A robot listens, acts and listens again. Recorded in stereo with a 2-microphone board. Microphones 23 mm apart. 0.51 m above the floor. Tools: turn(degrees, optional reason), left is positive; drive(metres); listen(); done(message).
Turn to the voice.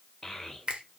turn(degrees=15, reason="The child speaking: about 15° left or 165° left.")
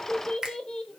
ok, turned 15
turn(degrees=150, reason="So it is at 150° left.")
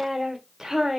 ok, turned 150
turn(degrees=-15, reason="The child speaking is now 15° right.")
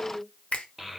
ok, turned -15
done("Found it: a child speaking, straight ahead.")